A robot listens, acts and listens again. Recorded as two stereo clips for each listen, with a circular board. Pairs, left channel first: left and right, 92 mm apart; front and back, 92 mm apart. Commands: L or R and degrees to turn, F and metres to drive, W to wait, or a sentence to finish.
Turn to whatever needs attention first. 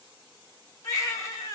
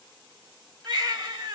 L145
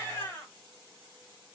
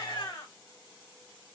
L25
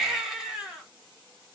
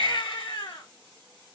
Facing the baby crying, 1 to 2 m away.